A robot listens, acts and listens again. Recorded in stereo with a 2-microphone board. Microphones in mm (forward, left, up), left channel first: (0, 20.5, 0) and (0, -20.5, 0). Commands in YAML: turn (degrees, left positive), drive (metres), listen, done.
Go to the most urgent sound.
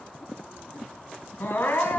turn: 65
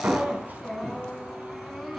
drive: 1.0
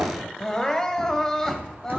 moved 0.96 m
turn: 15
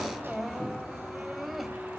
drive: 1.0
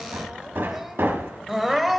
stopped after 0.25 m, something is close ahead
done: "Arrived at the crying, straight ahead."